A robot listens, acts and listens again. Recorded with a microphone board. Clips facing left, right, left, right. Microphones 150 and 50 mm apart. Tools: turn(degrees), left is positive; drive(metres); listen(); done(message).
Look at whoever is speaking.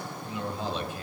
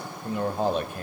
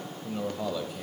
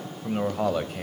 turn(degrees=-55)
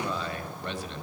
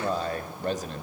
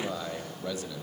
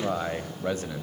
turn(degrees=-55)
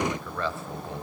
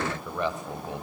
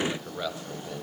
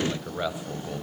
turn(degrees=-20)
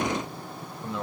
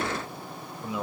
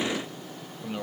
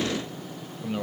done("Found it: a man speaking, straight ahead, 1 to 2 m away.")